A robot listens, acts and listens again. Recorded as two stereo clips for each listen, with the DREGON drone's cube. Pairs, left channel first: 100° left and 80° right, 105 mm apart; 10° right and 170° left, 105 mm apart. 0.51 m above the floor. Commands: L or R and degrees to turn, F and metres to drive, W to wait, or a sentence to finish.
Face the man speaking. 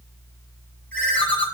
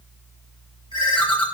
W
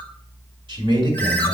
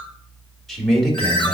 R100
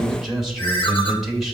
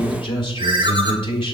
Facing the man speaking.